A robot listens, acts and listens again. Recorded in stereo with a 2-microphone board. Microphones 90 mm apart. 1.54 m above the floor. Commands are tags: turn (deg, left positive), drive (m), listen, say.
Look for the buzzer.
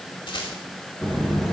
<turn deg="30"/>
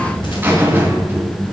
<turn deg="-25"/>
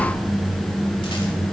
<say>Facing the buzzer, 2 to 4 m away.</say>